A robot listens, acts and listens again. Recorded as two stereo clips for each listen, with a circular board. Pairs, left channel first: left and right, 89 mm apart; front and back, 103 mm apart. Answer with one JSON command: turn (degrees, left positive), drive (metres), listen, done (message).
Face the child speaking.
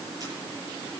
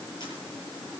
{"listen": true}
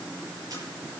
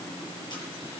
{"listen": true}
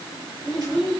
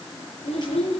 {"done": "Facing the child speaking."}